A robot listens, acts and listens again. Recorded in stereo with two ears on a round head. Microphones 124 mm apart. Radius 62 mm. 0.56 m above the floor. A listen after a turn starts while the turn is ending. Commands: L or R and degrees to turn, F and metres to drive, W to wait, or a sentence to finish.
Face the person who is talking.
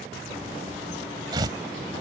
W
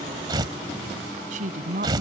R60
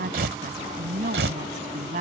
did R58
R60
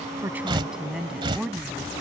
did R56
Facing the woman speaking.